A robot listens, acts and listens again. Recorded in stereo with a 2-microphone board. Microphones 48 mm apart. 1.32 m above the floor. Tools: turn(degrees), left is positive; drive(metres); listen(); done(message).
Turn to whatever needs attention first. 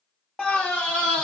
turn(degrees=20)
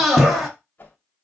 done("Found it: a scream, straight ahead.")